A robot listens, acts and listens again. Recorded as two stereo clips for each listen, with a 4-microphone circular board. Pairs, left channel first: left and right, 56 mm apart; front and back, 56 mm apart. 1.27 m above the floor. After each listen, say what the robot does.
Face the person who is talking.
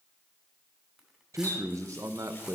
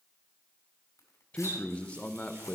Turn 70° right.
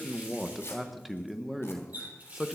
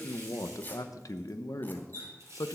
Facing the man speaking, under 1 m away.